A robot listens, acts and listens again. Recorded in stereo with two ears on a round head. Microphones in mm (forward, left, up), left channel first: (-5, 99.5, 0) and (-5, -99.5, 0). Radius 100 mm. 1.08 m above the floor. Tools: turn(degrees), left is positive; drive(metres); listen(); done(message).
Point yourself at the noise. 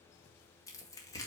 turn(degrees=30)
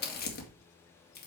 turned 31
turn(degrees=135)
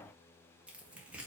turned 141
done("Facing the tearing paper, 1 to 2 m away.")